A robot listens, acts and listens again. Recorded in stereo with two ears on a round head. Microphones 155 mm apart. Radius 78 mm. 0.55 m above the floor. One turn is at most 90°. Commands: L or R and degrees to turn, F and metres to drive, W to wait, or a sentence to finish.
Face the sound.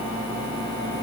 W
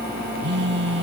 R65
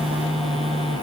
Facing the phone buzzing.